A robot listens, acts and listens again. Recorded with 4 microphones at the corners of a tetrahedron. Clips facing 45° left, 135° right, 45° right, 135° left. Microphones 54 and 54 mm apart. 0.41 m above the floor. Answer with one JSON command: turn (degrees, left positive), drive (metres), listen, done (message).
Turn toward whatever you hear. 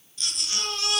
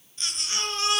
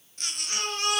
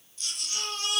{"turn": -75}
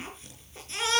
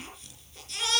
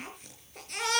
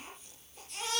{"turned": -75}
{"turn": -20}
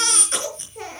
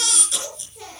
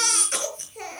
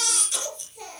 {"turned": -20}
{"done": "Found it: a baby crying, straight ahead, over 4 m away."}